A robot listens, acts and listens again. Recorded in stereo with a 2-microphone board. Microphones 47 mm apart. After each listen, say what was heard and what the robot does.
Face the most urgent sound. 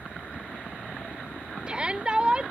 The shout: about 20° right or 160° right. Turn 20° right.
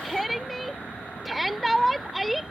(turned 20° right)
Facing the shout.